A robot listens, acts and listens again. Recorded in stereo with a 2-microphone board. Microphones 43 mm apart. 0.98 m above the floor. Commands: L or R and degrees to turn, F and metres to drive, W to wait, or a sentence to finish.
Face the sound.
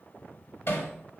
L70
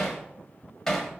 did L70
L10
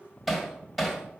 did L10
Found it: hammering, straight ahead.